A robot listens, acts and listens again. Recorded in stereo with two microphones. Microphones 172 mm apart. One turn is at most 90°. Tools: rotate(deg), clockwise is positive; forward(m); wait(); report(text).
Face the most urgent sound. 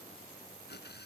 wait()
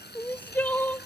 rotate(-30)
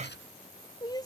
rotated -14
rotate(-90)
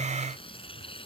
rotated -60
rotate(-90)
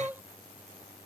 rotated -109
rotate(10)
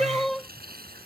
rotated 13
report("Found it: crying, straight ahead.")